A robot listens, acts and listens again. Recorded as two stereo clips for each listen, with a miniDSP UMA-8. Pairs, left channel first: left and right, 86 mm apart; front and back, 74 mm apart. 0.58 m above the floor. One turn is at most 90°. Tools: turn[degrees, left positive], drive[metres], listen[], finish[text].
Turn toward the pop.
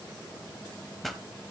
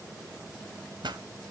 Thought: The pop: straight behind.
Action: turn[90]
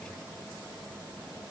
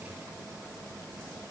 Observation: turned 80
Thought: Nothing new. It was at 100° left.
Action: turn[90]
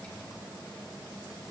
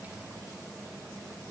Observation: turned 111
Thought: Nothing new. It was at 15° right.
Action: turn[-15]
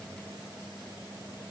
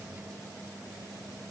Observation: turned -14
Action: finish[Facing where the pop came from. I can't hear it now.]